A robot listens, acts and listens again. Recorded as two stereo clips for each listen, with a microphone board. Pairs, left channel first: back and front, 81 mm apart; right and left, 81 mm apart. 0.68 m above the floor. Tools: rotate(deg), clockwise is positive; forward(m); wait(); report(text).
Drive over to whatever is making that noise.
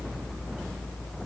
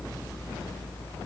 wait()
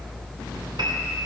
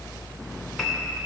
forward(1.0)
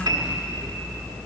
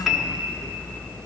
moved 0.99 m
forward(1.0)
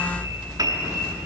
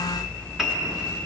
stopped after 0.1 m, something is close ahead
report("I am next to the piano.")